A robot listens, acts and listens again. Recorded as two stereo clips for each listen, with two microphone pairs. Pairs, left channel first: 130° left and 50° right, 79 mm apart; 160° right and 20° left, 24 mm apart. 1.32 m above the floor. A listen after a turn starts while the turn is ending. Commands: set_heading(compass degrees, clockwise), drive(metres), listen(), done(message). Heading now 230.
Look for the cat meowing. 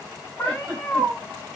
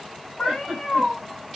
set_heading(30)
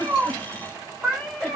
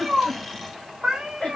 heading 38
set_heading(353)
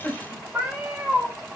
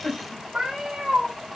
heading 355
set_heading(325)
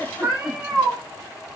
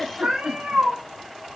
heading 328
set_heading(298)
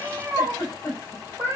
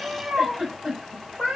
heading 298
done("Facing the cat meowing, 1 to 2 m away.")